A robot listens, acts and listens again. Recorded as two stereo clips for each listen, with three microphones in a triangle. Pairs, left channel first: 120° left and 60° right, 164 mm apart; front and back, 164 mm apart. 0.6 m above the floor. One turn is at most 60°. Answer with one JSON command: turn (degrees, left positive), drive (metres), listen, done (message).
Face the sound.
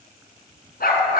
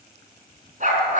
{"turn": 60}
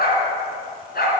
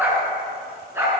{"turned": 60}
{"turn": 60}
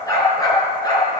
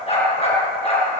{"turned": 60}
{"turn": 55}
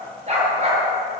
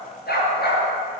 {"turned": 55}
{"turn": -15}
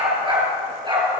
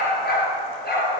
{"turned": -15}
{"done": "Facing the dog barking."}